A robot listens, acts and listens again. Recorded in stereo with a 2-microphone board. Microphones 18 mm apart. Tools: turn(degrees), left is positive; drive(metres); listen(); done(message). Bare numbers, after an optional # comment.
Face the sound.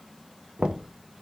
# The knocking: about 65° right or 115° right.
turn(-65)
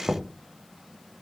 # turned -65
# So it is at 25° right.
turn(-25)
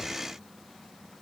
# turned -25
listen()
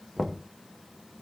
done("Found it: knocking, straight ahead.")